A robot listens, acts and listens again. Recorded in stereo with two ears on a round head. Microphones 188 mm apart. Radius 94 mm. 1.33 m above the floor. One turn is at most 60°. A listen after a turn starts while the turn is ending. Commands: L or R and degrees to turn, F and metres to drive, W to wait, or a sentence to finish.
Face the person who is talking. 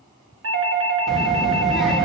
L30
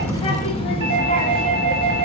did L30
L60
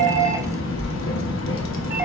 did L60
L60
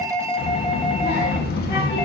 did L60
L55
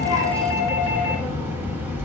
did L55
R10
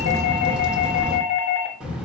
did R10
Facing the child speaking.